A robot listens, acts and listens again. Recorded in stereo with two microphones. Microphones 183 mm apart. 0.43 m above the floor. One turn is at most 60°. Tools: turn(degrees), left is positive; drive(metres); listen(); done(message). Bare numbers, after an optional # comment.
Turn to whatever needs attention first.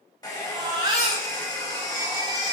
# The baby crying: about 25° right or 155° right.
turn(-25)
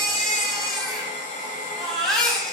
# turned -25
done("Facing the baby crying.")